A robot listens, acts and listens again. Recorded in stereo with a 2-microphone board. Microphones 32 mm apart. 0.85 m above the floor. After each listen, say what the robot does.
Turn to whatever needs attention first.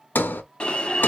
Turn 35° left.
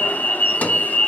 Turn 105° left.
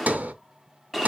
Found it: an alarm, straight ahead, 1 to 2 m away.